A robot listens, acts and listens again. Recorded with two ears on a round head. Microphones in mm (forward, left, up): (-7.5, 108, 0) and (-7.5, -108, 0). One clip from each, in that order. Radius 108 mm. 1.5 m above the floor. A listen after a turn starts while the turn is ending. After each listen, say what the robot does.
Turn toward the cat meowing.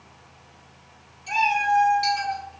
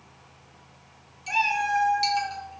Turn 35° right.
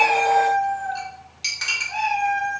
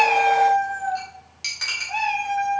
Turn 30° right.
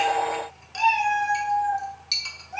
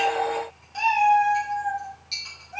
Turn 15° left.
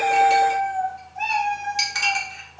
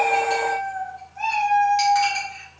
Found it: a cat meowing, straight ahead, 2 to 4 m away.